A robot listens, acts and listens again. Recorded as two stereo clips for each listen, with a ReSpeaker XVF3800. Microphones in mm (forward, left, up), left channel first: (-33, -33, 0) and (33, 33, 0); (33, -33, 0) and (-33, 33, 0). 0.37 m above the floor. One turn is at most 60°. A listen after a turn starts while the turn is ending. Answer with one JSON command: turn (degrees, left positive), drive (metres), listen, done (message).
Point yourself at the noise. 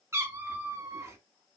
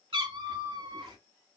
{"turn": 60}
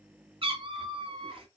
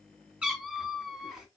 {"turn": 50}
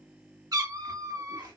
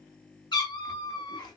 {"done": "Facing the cat meowing, under 1 m away."}